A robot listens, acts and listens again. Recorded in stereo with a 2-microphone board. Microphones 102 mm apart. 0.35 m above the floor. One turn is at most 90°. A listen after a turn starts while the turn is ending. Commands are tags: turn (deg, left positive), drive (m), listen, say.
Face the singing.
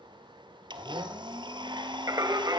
<turn deg="-40"/>
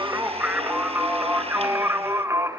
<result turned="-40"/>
<turn deg="-30"/>
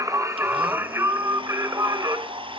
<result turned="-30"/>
<turn deg="-40"/>
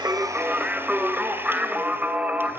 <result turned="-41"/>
<turn deg="-15"/>
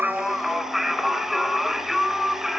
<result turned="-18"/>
<say>Found it: singing, straight ahead.</say>